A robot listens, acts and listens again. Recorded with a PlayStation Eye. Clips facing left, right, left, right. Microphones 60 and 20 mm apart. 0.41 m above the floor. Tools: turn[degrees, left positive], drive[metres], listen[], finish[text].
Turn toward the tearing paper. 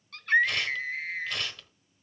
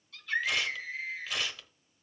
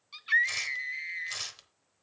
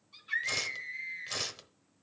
Action: turn[-30]
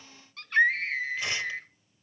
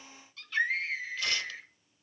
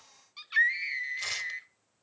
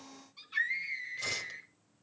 Action: listen[]
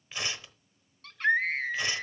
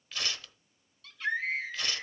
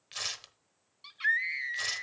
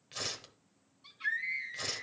Thought: So it is at 25° left.
Action: turn[25]
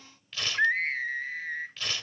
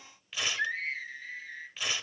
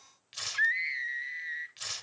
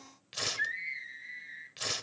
Thought: The tearing paper is now 15° right.
Action: turn[-15]
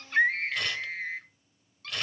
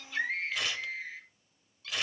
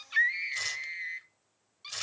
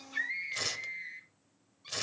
Action: finish[Found it: tearing paper, straight ahead.]